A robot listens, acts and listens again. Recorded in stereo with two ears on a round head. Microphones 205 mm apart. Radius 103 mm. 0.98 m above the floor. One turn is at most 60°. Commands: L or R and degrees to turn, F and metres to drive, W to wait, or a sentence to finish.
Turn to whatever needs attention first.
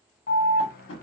L40
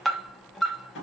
Facing the alarm, under 1 m away.